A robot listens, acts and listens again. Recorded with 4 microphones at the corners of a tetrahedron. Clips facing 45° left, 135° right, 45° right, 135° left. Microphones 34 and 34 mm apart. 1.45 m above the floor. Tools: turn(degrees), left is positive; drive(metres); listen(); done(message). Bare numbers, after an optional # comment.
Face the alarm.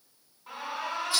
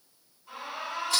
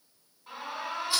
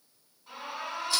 # The alarm: 20° left.
turn(20)
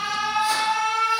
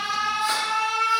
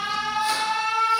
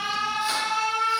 done("Found it: an alarm, straight ahead, 1 to 2 m away.")